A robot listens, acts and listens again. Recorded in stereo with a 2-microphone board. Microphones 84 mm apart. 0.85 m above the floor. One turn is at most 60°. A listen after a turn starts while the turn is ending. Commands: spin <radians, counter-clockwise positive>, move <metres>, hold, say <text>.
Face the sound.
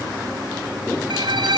spin -1.05
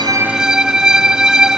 spin -0.17
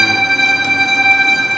say Found it: a violin, straight ahead.